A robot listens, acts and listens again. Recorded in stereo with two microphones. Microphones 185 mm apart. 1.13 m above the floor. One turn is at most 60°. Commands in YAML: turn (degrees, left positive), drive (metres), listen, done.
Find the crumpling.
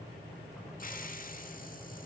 listen: true
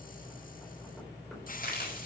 turn: 55
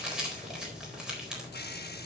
done: "Found it: crumpling, straight ahead."